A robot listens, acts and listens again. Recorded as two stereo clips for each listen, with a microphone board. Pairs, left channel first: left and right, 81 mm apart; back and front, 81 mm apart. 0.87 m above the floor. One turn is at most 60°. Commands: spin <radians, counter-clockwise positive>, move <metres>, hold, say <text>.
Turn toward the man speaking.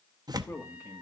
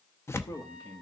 spin 1.05
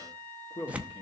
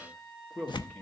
spin 1.05
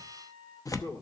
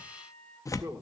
spin 0.79
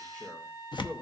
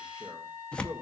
hold
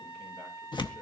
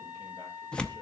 hold
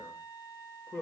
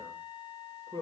spin 0.35
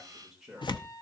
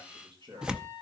say Facing the man speaking, 2 to 4 m away.